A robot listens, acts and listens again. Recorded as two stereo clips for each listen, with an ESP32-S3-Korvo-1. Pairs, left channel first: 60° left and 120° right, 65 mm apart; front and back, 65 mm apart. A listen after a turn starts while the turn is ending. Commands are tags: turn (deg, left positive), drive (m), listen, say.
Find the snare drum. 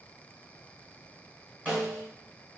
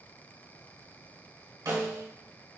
<turn deg="165"/>
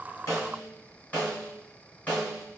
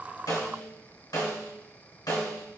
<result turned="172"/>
<say>Found it: a snare drum, straight ahead, 1 to 2 m away.</say>